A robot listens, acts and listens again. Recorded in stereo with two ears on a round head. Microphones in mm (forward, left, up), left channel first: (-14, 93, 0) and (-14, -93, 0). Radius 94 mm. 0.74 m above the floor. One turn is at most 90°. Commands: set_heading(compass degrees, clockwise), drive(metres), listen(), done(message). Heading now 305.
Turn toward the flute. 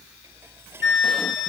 set_heading(250)
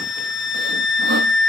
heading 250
set_heading(190)
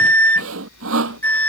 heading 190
set_heading(180)
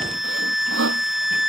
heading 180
done("Facing the flute.")